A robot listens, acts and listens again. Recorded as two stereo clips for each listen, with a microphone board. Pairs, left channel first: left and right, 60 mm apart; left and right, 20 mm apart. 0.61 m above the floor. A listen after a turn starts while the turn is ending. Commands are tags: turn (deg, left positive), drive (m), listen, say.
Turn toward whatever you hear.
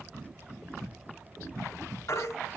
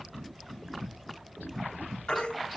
<turn deg="50"/>
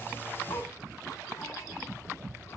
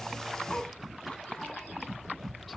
<listen/>
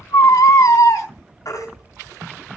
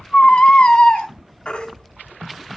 <turn deg="75"/>
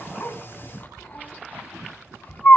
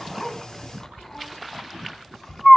<turn deg="30"/>
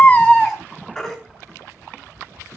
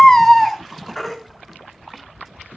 <say>Found it: a baby crying, straight ahead.</say>